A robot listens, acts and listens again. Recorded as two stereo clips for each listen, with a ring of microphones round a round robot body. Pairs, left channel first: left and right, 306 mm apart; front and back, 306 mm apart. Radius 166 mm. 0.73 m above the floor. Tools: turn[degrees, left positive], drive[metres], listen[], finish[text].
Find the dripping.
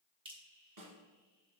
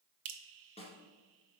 Thought: The dripping: 165° right.
Action: turn[-165]
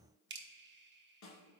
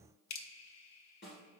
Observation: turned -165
Thought: The dripping is now 35° right.
Action: turn[-35]
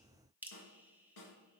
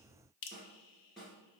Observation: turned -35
Action: finish[Found it: dripping, straight ahead, under 1 m away.]